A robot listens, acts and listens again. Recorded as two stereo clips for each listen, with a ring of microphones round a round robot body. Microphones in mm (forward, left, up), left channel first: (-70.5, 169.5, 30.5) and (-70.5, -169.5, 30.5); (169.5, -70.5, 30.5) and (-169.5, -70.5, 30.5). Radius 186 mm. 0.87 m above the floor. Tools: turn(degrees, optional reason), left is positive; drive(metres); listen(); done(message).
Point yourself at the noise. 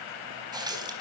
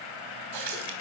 turn(degrees=-170, reason="The running tap: 170° right.")
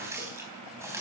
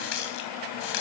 done("Found it: a running tap, straight ahead, 2 to 4 m away.")